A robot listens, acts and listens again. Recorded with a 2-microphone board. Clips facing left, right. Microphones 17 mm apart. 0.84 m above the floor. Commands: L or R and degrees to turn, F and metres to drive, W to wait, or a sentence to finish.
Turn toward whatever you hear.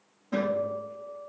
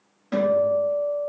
R60
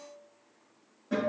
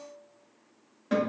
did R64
R55
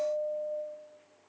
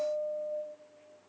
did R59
Facing the guitar, 2 to 4 m away.